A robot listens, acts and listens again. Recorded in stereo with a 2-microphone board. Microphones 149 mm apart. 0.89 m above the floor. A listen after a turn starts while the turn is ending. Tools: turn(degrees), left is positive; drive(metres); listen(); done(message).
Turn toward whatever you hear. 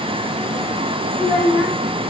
turn(degrees=15)
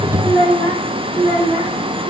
turn(degrees=35)
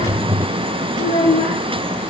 turn(degrees=105)
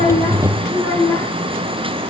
turn(degrees=35)
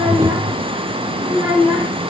turn(degrees=10)
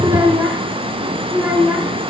done("Facing the child speaking.")